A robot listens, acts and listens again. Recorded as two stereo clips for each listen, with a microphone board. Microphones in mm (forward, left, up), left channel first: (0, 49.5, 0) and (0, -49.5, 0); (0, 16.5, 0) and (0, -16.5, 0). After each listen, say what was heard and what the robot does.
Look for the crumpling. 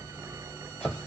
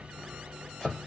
Keep listening.
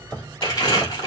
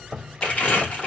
The crumpling: about 40° left or 140° left. Turn 40° left.
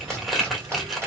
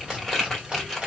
Facing the crumpling.